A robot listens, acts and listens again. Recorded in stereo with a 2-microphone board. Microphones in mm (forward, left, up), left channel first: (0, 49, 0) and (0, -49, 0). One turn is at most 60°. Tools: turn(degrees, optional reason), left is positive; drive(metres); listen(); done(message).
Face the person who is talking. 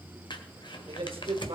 turn(degrees=-60, reason="The man speaking: about 65° right or 115° right.")
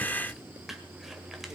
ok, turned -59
listen()
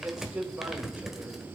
turn(degrees=-15, reason="So it is at 15° right.")
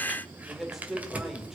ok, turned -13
done("Found it: a man speaking, straight ahead, 2 to 4 m away.")